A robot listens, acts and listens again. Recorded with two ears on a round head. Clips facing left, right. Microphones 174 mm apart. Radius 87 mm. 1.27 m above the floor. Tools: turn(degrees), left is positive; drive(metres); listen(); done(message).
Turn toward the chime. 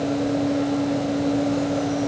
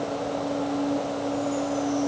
listen()
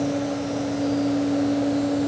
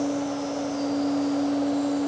listen()
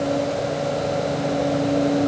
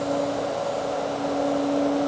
done("I can't make out a chime to turn to.")